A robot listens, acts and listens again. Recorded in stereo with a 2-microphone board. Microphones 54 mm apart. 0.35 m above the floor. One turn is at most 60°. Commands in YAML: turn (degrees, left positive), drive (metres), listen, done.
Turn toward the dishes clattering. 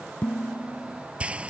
turn: 30
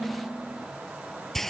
done: "Facing the dishes clattering."